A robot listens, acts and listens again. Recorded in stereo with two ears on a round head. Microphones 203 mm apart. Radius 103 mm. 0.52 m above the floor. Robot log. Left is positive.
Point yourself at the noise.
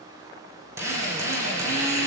cmd yaw -30
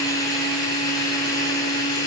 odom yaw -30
note: So it is at 15° left.
cmd yaw +15
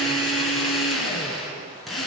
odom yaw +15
end: Found it: a drill, straight ahead.